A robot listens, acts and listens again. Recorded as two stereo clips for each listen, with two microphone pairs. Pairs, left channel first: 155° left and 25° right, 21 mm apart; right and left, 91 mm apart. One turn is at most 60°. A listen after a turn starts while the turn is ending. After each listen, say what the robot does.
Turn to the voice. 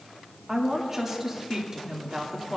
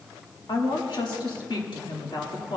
Turn 60° right.
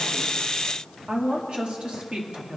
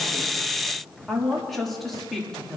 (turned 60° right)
Facing the woman speaking, 2 to 4 m away.